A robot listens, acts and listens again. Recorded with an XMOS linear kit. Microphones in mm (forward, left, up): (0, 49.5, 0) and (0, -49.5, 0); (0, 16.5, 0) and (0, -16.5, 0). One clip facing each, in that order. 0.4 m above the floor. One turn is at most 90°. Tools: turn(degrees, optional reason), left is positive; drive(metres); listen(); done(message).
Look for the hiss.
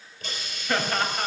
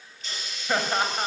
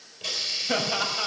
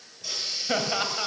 turn(degrees=45, reason="The hiss: about 45° left or 135° left.")
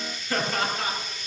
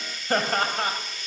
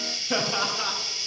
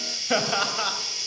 done("Facing the hiss, over 4 m away.")